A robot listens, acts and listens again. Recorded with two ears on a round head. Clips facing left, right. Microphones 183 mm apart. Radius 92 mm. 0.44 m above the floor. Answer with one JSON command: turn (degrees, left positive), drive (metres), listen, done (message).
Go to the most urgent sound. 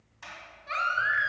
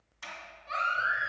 {"turn": 90}
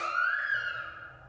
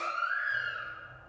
{"turn": 10}
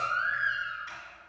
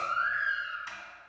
{"drive": 1.0}
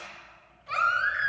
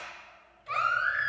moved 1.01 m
{"drive": 1.0}
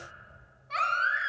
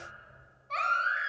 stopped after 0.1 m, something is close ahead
{"turn": 10}
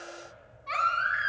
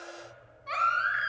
{"done": "I am next to the baby crying."}